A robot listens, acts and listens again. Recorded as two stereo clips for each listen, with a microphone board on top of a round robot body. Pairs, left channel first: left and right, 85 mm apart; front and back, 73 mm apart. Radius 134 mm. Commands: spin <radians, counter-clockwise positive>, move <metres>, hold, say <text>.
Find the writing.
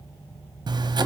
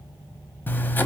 spin -1.05
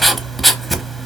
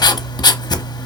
say Facing the writing.